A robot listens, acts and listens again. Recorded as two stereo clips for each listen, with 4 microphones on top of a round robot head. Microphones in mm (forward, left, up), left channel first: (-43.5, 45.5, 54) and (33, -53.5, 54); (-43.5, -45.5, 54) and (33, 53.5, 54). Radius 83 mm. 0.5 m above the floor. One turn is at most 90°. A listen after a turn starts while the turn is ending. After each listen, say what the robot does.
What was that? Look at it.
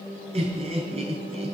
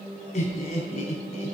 Turn 90° right.
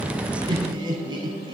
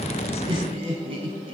Facing the laughter, over 4 m away.